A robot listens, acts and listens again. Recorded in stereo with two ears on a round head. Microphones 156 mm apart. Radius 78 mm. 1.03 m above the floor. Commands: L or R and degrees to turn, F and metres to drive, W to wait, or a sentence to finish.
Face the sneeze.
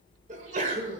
R45
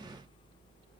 W
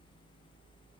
I heard a sneeze, but can't make it out now. It was about straight ahead or 90° right.